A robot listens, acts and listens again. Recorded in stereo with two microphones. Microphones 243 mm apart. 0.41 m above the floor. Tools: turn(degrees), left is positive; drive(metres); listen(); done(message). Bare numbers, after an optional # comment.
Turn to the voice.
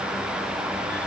listen()
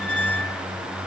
listen()
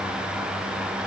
done("I can't make out anyone speaking, only a squeak.")